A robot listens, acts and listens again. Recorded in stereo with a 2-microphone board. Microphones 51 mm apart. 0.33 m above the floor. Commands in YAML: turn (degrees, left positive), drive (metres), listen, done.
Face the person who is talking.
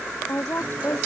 turn: 45
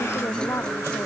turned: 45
listen: true
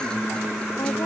listen: true
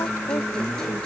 done: "I heard a woman speaking, but can't make it out now. It was about straight ahead or 90° left."